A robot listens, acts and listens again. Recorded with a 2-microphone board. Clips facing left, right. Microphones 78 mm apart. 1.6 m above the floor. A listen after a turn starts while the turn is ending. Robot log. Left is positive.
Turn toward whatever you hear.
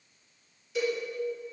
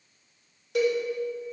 note: The cowbell: about 60° right or 120° right.
cmd yaw -60
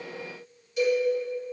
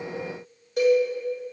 note: So it is at 55° right.
cmd yaw -55
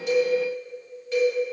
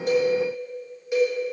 note: The cowbell is now 15° right.
cmd yaw -15
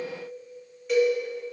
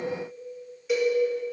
end: Facing the cowbell, 2 to 4 m away.